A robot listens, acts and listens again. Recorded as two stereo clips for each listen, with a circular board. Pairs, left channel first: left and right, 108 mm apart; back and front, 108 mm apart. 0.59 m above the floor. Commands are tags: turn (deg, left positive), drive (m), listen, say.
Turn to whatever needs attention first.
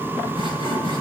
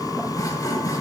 <listen/>
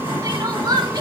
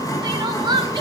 <turn deg="-40"/>
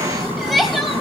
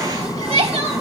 <say>Found it: crying, straight ahead.</say>